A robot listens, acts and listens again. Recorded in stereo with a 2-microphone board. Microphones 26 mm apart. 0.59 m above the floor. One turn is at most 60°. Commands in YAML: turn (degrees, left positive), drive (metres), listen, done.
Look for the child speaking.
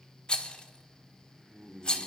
listen: true
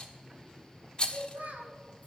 turn: -60
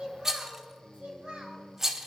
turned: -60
turn: -40
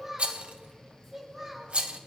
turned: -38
turn: -15
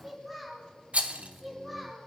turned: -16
done: "Found it: a child speaking, straight ahead."